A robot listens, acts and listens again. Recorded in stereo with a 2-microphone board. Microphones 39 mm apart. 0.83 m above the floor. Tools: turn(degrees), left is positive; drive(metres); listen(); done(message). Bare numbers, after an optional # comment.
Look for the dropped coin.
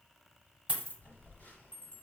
# The dropped coin: about 35° right or 145° right.
turn(-35)
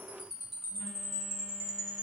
listen()
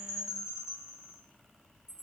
done("I heard a dropped coin, but can't make it out now. It was about straight ahead or 110° right.")